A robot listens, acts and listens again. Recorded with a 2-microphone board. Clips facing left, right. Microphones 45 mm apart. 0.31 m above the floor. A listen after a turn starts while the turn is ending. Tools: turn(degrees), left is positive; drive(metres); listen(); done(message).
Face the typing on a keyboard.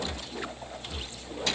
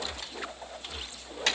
listen()
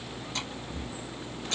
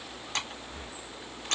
turn(degrees=-65)
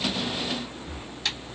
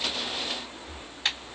listen()
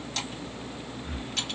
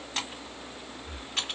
listen()
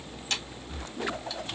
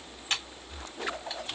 turn(degrees=-25)
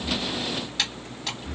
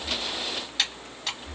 done("Found it: typing on a keyboard, straight ahead.")